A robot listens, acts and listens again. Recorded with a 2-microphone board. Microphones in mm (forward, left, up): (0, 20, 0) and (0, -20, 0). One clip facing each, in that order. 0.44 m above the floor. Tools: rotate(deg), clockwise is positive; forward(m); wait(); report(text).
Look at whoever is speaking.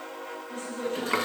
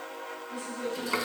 rotate(-65)
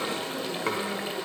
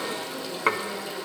wait()
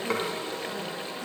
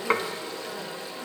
wait()
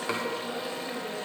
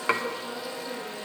report("I heard a woman speaking, but can't make it out now. It was about straight ahead or 50° left.")